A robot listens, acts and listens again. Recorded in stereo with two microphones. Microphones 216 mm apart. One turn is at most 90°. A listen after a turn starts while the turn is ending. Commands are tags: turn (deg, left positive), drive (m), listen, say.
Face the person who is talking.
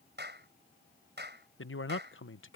<turn deg="70"/>
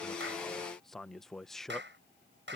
<say>Facing the man speaking.</say>